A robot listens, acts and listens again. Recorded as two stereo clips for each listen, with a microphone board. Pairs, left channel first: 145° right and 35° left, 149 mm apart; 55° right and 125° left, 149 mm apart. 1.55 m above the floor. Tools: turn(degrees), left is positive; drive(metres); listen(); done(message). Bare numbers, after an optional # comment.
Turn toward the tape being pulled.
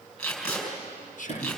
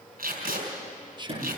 # The tape being pulled: 130° left.
turn(130)
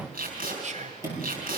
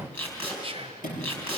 # The tape being pulled is now 20° left.
turn(20)
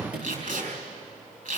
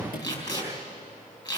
done("Found it: tape being pulled, straight ahead, over 4 m away.")